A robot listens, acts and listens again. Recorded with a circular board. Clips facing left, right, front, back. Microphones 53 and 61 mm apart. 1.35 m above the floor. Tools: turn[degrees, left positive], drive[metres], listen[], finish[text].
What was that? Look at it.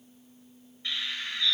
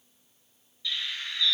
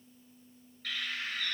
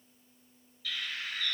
Thought: The bird: 40° left.
Action: turn[40]
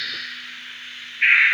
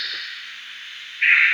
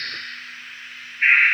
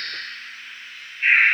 Action: finish[Found it: a bird, straight ahead, 1 to 2 m away.]